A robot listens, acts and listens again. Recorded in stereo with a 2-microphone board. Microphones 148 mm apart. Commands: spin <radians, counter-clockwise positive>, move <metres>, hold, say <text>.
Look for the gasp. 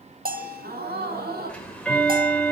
spin -1.57
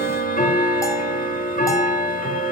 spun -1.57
say I heard a gasp from this way, but can't make it out now.